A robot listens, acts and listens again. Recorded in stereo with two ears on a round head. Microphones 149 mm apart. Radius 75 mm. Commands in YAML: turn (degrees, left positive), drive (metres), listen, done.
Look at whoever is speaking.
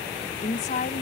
turn: 45
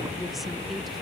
listen: true
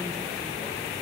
listen: true
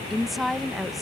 done: "Facing the woman speaking."